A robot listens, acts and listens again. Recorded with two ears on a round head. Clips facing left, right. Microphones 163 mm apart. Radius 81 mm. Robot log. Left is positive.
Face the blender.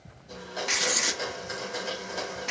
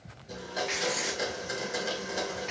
note: The blender: about 15° right or 165° right.
cmd yaw -15
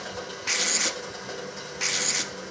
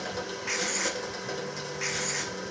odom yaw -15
note: So it is at 150° right.
cmd yaw -150
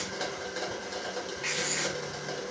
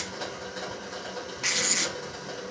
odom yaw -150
note: The blender is now 25° left.
cmd yaw +25
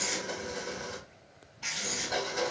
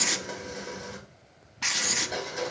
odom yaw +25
end: Found it: a blender, straight ahead, 2 to 4 m away.